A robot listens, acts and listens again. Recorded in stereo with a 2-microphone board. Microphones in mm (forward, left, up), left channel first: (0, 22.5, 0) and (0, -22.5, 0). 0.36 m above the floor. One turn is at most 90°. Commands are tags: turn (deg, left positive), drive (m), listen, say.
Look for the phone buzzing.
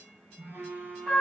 <turn deg="-60"/>
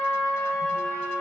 <listen/>
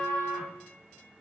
<listen/>
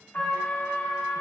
<say>I heard a phone buzzing, but can't make it out now. It was about straight ahead or 60° right.</say>